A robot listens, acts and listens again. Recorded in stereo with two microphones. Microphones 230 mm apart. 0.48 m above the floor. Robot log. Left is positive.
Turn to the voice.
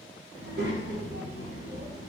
note: The child speaking: about 50° right or 130° right.
cmd yaw -50
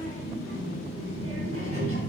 note: So it is at 80° right.
cmd yaw -80
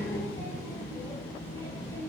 note: The child speaking is now 10° left.
cmd yaw +10
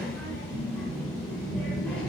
end: Facing the child speaking, under 1 m away.